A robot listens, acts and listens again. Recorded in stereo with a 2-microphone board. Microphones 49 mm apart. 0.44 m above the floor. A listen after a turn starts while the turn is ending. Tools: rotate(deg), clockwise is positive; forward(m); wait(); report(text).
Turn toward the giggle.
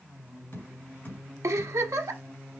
rotate(90)
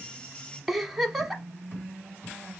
report("Facing the giggle, 1 to 2 m away.")